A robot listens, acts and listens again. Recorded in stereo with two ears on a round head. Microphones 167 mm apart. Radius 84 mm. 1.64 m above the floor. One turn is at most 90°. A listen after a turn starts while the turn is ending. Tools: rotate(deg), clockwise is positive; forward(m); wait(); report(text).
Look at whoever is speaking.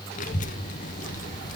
rotate(-40)
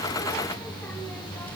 rotate(-10)
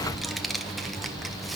report("Facing the child speaking, under 1 m away.")